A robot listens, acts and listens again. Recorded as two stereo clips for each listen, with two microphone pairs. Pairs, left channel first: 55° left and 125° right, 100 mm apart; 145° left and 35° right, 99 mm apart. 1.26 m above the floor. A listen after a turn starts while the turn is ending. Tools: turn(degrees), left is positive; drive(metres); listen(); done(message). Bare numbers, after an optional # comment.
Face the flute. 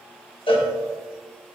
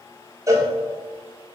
listen()
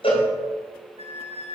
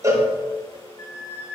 # The flute: 155° right.
turn(-155)
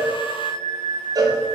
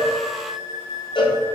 done("Facing the flute.")